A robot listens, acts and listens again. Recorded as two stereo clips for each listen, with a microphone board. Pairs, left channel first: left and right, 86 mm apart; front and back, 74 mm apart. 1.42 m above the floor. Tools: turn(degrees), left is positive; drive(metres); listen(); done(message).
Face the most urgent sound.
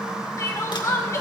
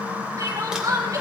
turn(degrees=140)
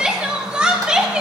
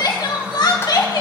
turn(degrees=-15)
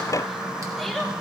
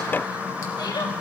listen()
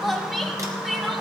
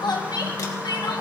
done("Found it: crying, straight ahead, 1 to 2 m away.")